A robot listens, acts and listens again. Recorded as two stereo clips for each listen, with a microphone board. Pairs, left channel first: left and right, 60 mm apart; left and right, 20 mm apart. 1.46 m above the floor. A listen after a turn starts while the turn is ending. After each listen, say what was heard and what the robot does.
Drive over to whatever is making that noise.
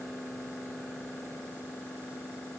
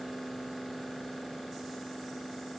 Keep listening.
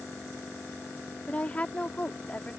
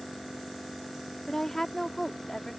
The woman speaking: about 20° left or 160° left. Turn 20° left.
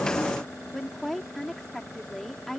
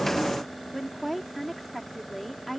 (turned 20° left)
Drive 1.0 m forward.
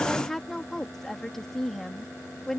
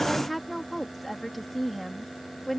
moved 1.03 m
Drive 1.0 m forward.
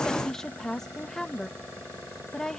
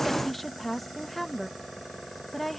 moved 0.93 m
Drive 1.0 m forward.
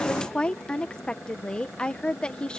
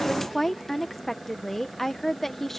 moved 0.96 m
The woman speaking is now 15° left. Turn 15° left.
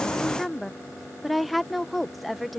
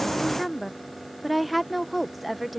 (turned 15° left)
Drive 1.0 m forward.
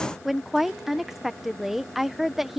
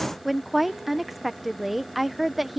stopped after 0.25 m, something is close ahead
I am next to the woman speaking.